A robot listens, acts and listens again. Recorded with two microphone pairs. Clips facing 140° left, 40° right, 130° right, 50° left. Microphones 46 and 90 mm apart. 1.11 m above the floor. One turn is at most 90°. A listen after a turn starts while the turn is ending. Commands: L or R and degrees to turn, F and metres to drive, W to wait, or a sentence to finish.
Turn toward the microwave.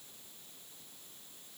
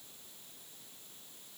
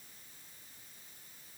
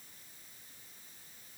W
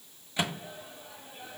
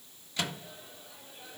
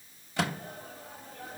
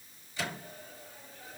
R90
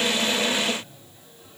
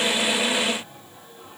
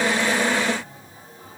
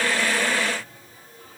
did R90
R60
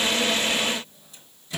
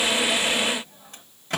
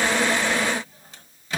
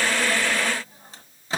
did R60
R10
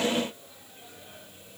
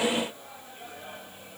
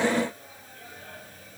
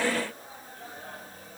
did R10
W
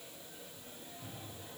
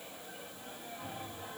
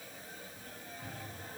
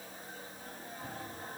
Facing the microwave, 1 to 2 m away.